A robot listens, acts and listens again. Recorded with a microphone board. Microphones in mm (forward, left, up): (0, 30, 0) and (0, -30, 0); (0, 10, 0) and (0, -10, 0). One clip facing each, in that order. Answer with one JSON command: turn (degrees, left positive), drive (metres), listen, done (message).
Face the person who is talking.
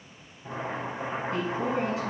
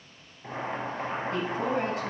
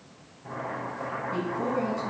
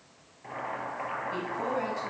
{"turn": -50}
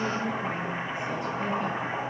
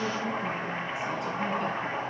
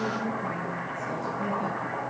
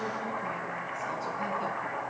{"listen": true}
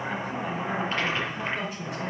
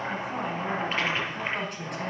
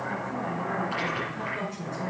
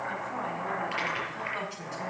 {"turn": -60}
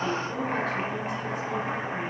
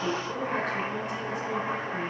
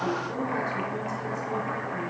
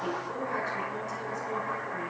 {"listen": true}
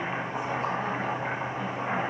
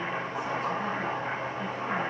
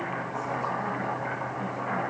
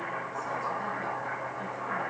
{"listen": true}
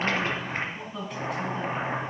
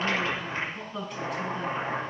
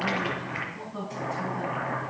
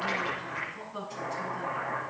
{"done": "Found it: a woman speaking, straight ahead."}